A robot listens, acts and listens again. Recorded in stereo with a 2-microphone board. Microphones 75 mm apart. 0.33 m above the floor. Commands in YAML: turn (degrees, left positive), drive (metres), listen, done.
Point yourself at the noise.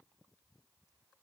listen: true
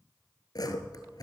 turn: 60
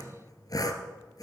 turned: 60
turn: 60
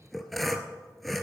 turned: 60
done: "Facing the sawing, 1 to 2 m away."